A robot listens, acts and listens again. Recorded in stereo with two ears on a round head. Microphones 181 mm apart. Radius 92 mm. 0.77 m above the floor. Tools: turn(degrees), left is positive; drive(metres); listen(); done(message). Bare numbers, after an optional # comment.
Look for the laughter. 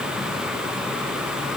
listen()
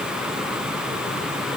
listen()
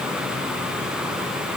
done("I can't make out laughter to turn to.")